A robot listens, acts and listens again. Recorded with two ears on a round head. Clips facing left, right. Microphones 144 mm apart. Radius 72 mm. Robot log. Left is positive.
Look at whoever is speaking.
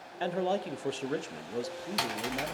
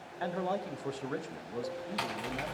note: The man speaking: about 30° left or 150° left.
cmd yaw +30
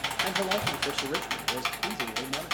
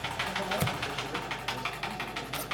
cmd idle
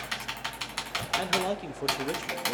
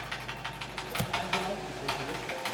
note: So it is at 120° left.
cmd yaw +120
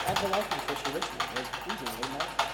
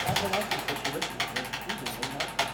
cmd idle
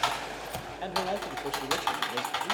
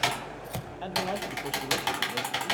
cmd idle
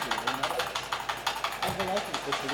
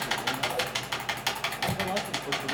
note: The man speaking is now 15° left.
cmd yaw +15
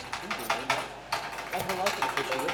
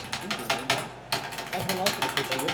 end: Found it: a man speaking, straight ahead, under 1 m away.